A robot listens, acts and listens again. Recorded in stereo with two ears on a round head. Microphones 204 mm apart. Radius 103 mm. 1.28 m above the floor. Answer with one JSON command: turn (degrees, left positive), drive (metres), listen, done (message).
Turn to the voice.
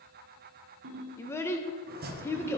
{"turn": 30}
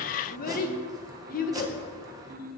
{"turn": 140}
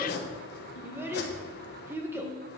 {"turn": -10}
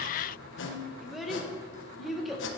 {"done": "Facing the child speaking."}